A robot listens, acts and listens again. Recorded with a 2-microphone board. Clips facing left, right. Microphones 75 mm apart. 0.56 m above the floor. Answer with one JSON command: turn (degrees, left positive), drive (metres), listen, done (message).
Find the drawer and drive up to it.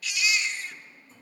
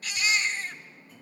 {"turn": 30}
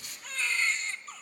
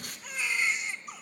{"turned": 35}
{"listen": true}
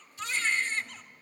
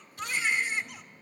{"listen": true}
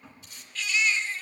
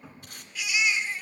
{"drive": 1.0}
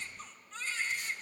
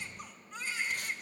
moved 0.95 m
{"listen": true}
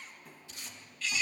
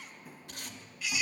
{"drive": 1.0}
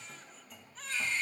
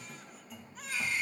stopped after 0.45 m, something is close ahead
{"done": "I am next to the drawer."}